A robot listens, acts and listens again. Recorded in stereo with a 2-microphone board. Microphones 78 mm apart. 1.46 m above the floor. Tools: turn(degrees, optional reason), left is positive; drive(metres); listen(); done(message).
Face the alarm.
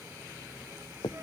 listen()
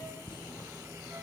listen()
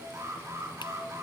turn(degrees=-35, reason="The alarm: about 35° right or 145° right.")
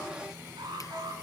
turn(degrees=-110, reason="So it is at 110° right.")
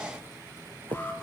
listen()
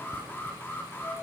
turn(degrees=25, reason="The alarm is now 25° left.")
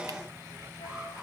listen()
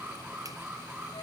turn(degrees=-15, reason="The alarm is now 15° right.")
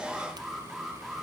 done("Found it: an alarm, straight ahead, over 4 m away.")